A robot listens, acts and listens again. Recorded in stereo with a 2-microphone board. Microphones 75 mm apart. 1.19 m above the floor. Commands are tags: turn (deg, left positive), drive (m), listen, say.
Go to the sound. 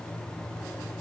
<listen/>
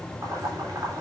<turn deg="-45"/>
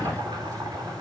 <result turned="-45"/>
<turn deg="-85"/>
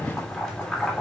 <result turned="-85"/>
<drive m="1.0"/>
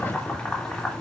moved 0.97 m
<turn deg="10"/>
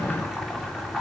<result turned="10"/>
<drive m="1.0"/>
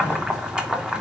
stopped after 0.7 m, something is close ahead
<turn deg="-10"/>
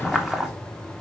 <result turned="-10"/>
<say>Arrived at the boiling, straight ahead.</say>